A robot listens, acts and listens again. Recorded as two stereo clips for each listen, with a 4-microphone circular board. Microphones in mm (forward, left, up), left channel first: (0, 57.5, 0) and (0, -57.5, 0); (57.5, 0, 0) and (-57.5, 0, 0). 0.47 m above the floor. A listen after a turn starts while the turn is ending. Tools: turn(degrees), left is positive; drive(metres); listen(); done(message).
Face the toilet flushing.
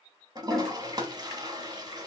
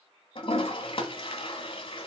turn(degrees=-35)
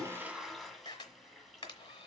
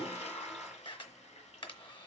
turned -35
listen()
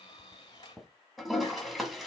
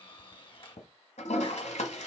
done("Facing the toilet flushing.")